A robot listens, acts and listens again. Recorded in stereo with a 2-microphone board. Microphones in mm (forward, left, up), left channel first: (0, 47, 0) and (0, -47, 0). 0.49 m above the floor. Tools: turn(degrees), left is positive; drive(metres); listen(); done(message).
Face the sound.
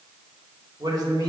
turn(degrees=-40)
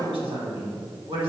turn(degrees=-110)
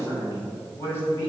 turn(degrees=30)
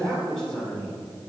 done("Found it: a man speaking, straight ahead.")